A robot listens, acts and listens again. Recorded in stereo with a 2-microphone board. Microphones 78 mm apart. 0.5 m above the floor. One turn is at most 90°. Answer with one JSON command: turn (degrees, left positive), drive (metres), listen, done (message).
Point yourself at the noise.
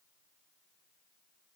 {"listen": true}
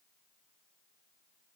{"listen": true}
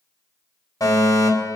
{"turn": 50}
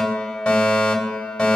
{"turn": 15}
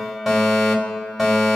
{"done": "Facing the fire alarm, over 4 m away."}